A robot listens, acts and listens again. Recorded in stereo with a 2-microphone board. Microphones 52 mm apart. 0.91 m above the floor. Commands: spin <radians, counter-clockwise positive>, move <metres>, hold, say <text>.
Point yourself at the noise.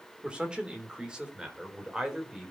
spin -0.52
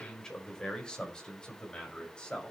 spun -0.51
spin 0.35
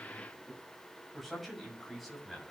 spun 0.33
say Facing the man speaking.